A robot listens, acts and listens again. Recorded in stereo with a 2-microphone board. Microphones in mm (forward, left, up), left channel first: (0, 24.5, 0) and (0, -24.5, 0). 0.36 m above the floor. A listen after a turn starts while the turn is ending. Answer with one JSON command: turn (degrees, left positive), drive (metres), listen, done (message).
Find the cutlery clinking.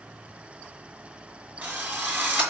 {"listen": true}
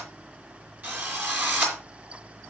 {"listen": true}
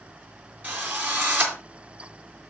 {"done": "I can't make out cutlery clinking, only a drill."}